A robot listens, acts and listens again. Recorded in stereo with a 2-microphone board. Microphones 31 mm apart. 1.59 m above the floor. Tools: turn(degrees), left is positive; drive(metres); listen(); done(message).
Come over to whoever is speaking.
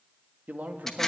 turn(degrees=-60)
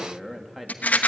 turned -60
drive(metres=1.0)
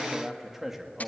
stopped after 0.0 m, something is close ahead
done("Something is in my way. I am facing the man speaking but have not reached it.")